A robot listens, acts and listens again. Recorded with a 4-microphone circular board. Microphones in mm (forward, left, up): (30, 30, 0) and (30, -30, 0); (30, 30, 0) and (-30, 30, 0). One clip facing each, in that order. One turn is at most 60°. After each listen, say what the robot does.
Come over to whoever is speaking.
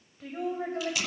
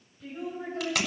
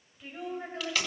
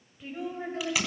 Turn 60° left.
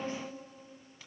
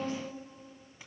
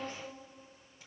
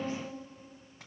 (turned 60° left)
Turn 30° left.
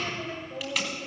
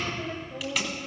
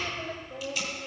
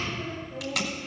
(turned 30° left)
Turn 15° left.
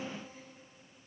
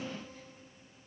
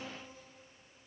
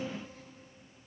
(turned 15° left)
Keep listening.
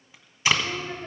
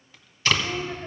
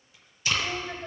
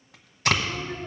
Drive 1.0 m forward.
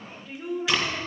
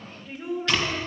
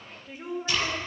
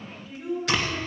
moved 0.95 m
Drive 1.0 m forward.
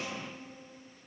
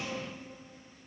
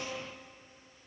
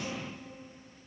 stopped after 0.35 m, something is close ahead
Keep listening.
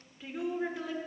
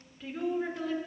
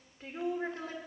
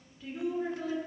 Arrived at the woman speaking, straight ahead.